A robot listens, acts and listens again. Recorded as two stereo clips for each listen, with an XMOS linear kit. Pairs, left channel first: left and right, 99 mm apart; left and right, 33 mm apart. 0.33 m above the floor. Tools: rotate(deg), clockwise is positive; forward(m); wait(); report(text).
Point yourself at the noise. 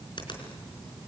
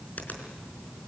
rotate(-55)
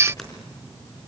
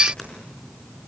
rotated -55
report("Found it: a finger snap, straight ahead, over 4 m away.")